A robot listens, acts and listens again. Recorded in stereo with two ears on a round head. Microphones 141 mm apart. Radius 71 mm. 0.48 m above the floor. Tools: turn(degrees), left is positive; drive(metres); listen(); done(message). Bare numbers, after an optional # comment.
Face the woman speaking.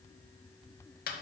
listen()
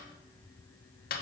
listen()
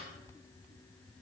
done("I can't make out a woman speaking, only a snare drum.")